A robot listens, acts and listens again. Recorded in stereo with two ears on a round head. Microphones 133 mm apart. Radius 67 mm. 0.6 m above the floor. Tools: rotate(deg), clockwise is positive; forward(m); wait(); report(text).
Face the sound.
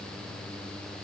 wait()
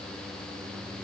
wait()
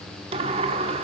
rotate(40)
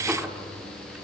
wait()
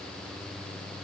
wait()
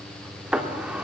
report("Facing the sliding door.")